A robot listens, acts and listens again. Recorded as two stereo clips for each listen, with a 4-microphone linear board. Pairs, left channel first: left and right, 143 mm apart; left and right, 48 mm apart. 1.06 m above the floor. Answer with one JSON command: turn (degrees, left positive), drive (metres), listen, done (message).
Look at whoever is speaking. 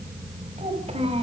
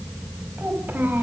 {"turn": -45}
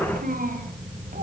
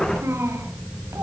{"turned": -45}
{"turn": -100}
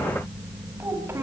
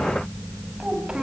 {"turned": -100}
{"turn": -20}
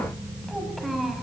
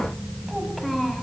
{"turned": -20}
{"done": "Facing the child speaking."}